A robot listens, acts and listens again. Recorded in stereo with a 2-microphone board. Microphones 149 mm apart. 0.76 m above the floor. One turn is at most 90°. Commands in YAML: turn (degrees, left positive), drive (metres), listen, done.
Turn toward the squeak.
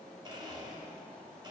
listen: true
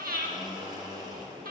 listen: true
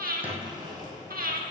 turn: -30
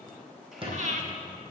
turn: -90
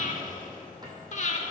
turn: -30
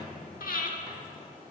listen: true
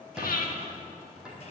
done: "Found it: a squeak, straight ahead."